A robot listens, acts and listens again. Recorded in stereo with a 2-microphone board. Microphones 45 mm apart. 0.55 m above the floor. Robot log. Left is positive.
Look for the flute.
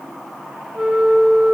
cmd yaw -30
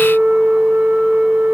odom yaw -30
note: So it is at 140° right.
cmd yaw -140
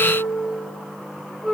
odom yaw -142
end: Found it: a flute, straight ahead, 1 to 2 m away.